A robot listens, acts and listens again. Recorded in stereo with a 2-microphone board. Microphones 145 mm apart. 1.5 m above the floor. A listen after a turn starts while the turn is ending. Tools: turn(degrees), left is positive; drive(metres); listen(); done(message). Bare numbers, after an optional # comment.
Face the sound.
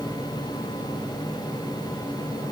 listen()
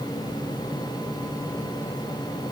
listen()
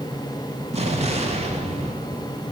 # The explosion: about 45° right or 135° right.
turn(-45)
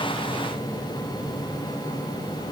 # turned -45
listen()
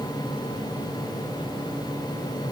done("I heard an explosion, but can't make it out now. It was about straight ahead or 90° right.")